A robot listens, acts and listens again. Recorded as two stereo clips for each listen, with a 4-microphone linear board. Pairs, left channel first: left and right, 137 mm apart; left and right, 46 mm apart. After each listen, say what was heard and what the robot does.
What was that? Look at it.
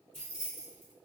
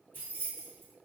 The keys jangling: about 50° right or 130° right. Turn 50° right.
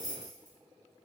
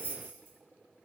So it is at 70° right. Turn 70° right.
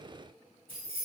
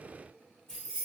The keys jangling is now 15° left. Turn 15° left.
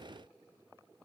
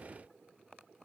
Keep listening.
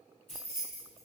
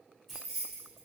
Facing the keys jangling.